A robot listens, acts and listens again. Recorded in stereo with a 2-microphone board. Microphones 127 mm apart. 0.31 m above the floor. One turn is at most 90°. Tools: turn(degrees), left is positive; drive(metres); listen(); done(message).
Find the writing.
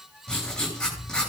turn(degrees=30)
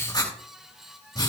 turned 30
turn(degrees=90)
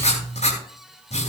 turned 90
turn(degrees=75)
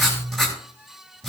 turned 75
done("Facing the writing, over 4 m away.")